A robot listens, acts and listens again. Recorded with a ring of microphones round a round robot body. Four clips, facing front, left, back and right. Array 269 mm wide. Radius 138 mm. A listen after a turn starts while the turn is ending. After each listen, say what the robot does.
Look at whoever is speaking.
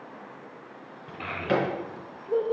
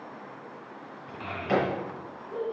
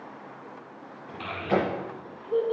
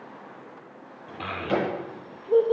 Turn 75° right.
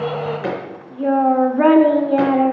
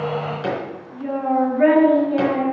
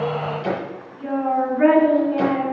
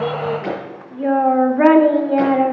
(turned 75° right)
Turn 50° right.
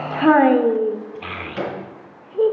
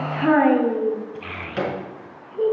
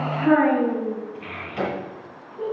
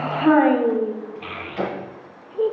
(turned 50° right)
Facing the child speaking, 1 to 2 m away.